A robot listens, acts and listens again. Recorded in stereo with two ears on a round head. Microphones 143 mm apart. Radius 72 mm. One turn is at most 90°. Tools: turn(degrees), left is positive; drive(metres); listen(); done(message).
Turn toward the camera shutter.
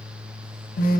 listen()
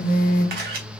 turn(degrees=-65)
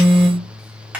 turn(degrees=-10)
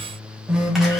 listen()
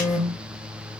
done("Found it: a camera shutter, straight ahead, 1 to 2 m away.")